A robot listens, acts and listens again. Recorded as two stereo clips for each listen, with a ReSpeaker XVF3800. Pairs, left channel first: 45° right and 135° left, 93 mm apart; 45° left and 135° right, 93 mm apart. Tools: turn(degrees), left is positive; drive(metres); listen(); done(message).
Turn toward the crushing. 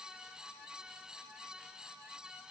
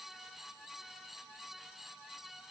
listen()
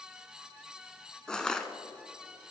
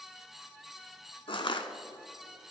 turn(degrees=35)
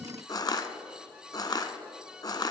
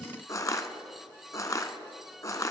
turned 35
done("Facing the crushing, under 1 m away.")